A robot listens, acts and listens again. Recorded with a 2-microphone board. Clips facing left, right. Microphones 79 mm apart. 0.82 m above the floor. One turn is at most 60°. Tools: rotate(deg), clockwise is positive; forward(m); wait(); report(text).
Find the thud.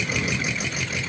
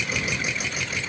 wait()
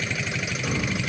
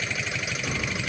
wait()
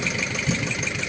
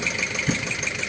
rotate(50)
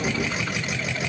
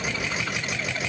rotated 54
wait()
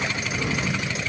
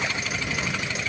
report("I heard a thud, but can't make it out now. It was about 5° left or 75° right.")